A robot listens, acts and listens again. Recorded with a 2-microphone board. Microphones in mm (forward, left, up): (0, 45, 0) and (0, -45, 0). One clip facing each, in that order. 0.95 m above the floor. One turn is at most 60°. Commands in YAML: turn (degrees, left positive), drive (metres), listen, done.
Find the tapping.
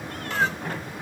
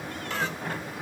listen: true
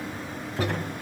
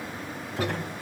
turn: 30
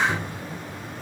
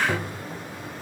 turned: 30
turn: -30
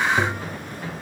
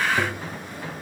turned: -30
done: "Found it: tapping, straight ahead."